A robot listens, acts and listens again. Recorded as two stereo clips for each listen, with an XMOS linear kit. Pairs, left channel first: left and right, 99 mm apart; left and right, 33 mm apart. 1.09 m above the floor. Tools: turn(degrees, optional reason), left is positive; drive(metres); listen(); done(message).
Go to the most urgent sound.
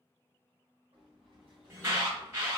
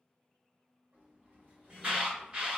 turn(degrees=-25, reason="The alarm: about 25° right or 155° right.")
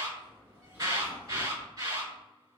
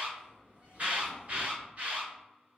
turn(degrees=-130, reason="So it is at 130° right.")
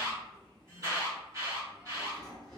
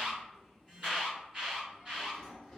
turn(degrees=-35, reason="The alarm is now 35° right.")
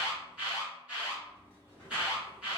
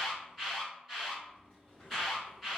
turn(degrees=-10, reason="The alarm is now 10° right.")
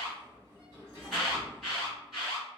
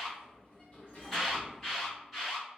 drive(metres=1.0)
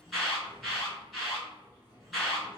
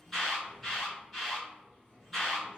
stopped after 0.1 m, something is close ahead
done("Something is in my way. I am facing the alarm but have not reached it.")